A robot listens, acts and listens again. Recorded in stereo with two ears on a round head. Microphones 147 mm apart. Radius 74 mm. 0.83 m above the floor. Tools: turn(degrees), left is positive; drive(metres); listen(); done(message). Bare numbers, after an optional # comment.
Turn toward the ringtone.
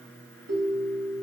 turn(-90)
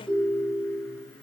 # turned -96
done("Facing the ringtone.")